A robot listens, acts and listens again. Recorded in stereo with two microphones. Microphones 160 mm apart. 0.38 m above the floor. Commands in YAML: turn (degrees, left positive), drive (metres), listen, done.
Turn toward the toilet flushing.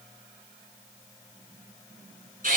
listen: true
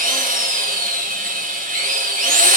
listen: true
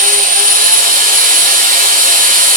done: "I can't make out a toilet flushing, only a drill."